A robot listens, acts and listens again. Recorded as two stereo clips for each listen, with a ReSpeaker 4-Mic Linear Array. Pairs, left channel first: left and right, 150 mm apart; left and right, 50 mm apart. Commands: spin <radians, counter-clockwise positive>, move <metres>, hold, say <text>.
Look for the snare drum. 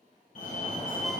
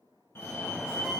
hold
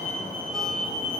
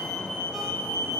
hold
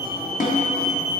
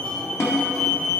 spin 1.13
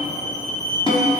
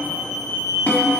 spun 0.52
spin 0.61
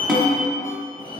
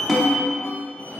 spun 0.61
say Found it: a snare drum, straight ahead.